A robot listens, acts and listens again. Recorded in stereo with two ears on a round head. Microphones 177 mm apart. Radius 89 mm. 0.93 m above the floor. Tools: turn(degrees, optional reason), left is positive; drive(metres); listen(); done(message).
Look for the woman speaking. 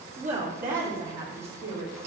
turn(degrees=-55, reason="The woman speaking: about 55° right or 125° right.")
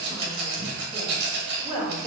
turn(degrees=-15, reason="So it is at 15° right.")
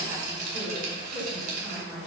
turn(degrees=-10, reason="The woman speaking is now 10° right.")
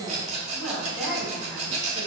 done("Found it: a woman speaking, straight ahead, over 4 m away.")